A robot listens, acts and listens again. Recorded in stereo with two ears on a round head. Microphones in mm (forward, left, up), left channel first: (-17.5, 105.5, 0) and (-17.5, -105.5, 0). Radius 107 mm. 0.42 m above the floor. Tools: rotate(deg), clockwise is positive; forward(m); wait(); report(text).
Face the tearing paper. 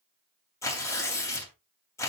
rotate(-30)
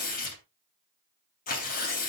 rotate(-135)
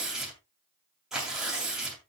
report("Found it: tearing paper, straight ahead, 2 to 4 m away.")